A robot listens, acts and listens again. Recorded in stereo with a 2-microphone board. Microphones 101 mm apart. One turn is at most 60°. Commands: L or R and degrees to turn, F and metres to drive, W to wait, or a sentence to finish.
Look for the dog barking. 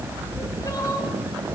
W
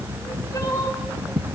W
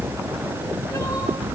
I can't make out a dog barking to turn to.